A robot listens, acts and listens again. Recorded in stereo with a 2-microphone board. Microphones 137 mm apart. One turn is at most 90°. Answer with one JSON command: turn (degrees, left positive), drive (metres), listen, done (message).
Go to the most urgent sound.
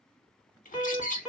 {"turn": -30}
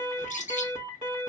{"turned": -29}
{"turn": -90}
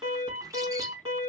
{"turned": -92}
{"turn": -45}
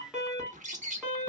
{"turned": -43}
{"drive": 1.0}
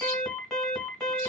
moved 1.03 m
{"drive": 1.0}
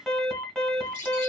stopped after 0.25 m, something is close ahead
{"done": "I am next to the alarm."}